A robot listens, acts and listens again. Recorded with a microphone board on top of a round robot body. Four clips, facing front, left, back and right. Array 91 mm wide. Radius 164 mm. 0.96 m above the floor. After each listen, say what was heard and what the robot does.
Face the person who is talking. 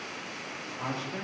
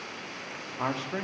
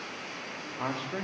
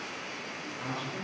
The man speaking: 110° left. Turn 110° left.
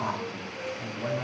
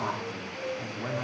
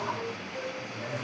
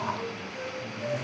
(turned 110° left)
Keep listening.
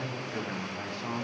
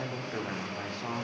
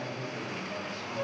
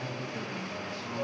The man speaking is now 60° left. Turn 60° left.
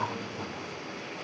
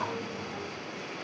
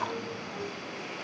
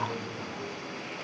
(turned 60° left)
Keep listening.
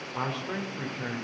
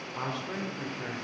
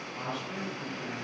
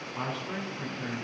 Found it: a man speaking, straight ahead, 2 to 4 m away.